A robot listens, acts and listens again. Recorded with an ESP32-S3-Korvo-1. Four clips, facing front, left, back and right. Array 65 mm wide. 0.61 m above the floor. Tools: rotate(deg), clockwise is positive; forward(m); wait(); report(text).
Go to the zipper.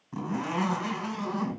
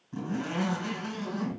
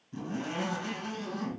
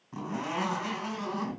rotate(25)
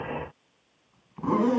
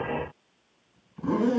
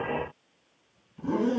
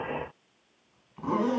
rotate(15)
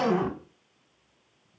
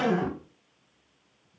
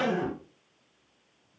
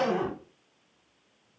forward(1.0)
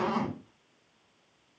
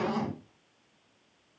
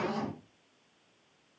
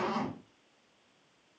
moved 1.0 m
forward(1.0)
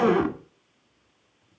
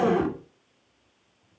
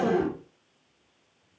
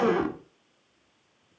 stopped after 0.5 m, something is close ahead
rotate(10)
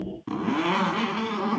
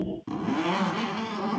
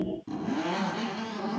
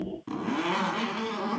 report("I am next to the zipper.")